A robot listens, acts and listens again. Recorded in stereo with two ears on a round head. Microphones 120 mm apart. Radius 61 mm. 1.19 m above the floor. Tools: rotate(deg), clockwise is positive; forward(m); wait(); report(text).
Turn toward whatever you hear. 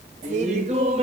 rotate(50)
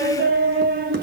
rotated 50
rotate(80)
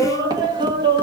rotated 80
rotate(35)
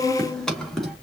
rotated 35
report("Found it: laughter, straight ahead.")